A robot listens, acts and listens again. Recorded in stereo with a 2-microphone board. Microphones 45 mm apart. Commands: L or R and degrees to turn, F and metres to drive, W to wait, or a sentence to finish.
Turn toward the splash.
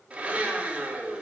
W
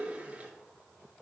W
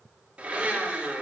I can't make out a splash to turn to.